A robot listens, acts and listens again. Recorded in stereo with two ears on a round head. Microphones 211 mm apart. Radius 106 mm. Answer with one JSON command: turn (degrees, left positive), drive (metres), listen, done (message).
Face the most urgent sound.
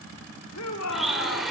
{"turn": 90}
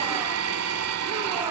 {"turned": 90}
{"listen": true}
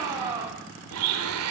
{"turn": -15}
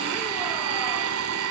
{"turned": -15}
{"listen": true}
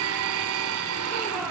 {"listen": true}
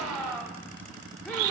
{"done": "Facing the shout."}